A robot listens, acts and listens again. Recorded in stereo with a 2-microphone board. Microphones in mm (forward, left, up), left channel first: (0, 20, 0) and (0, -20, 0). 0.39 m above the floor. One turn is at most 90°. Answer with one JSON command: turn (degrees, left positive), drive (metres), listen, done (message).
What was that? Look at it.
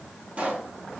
{"turn": -35}
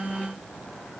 {"listen": true}
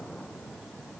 {"done": "I heard a pop, but can't make it out now. It was about straight ahead or 110° right."}